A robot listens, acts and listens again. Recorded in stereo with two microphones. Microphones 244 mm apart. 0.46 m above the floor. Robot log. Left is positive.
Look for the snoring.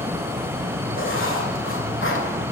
cmd idle
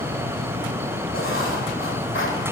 cmd idle
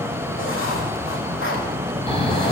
note: The snoring: about 25° left or 155° left.
cmd yaw +25
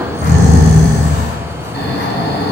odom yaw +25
note: So it is at 130° left.
cmd yaw +130
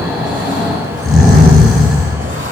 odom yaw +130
end: Found it: snoring, straight ahead.